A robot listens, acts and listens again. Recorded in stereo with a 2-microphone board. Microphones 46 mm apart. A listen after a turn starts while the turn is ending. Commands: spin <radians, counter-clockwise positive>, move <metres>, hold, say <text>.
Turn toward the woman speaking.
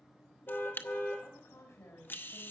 spin 1.31
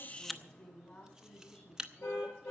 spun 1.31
spin 0.61
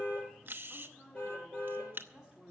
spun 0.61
say Facing the woman speaking.